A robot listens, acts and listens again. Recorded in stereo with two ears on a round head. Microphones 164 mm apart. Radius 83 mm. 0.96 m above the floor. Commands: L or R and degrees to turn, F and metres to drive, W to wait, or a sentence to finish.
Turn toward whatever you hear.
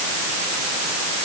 W
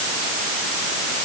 W
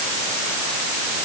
I can't make out anything to turn to.